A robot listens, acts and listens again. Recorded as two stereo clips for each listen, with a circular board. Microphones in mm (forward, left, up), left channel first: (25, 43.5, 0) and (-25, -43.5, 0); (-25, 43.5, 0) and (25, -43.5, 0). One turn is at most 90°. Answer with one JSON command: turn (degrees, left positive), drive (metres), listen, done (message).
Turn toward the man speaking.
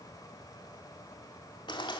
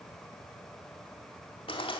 {"listen": true}
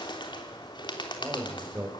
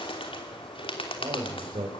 {"turn": -50}
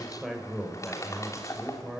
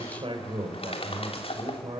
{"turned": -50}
{"turn": -30}
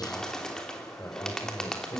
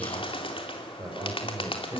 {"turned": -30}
{"done": "Found it: a man speaking, straight ahead."}